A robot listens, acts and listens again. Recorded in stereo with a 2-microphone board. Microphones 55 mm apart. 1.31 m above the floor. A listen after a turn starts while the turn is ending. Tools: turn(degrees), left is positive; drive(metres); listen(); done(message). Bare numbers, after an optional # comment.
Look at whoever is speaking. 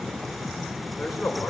turn(30)
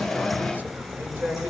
# So it is at 30° right.
turn(-30)
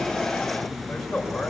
done("Facing the man speaking, over 4 m away.")